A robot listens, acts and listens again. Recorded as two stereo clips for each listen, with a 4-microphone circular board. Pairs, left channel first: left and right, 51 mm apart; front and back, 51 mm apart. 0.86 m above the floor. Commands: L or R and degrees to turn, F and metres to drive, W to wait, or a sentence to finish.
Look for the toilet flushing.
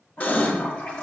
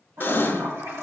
L160
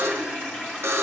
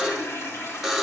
L25
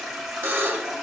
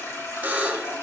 Found it: a toilet flushing, straight ahead.